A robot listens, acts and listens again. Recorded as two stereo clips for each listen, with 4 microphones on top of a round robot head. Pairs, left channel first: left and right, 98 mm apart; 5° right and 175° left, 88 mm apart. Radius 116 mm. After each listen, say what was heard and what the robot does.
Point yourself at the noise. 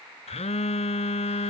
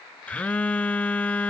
The phone buzzing: 70° left. Turn 70° left.
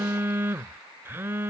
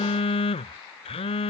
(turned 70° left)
The phone buzzing is now 20° right. Turn 20° right.
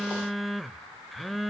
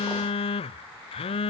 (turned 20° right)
Facing the phone buzzing.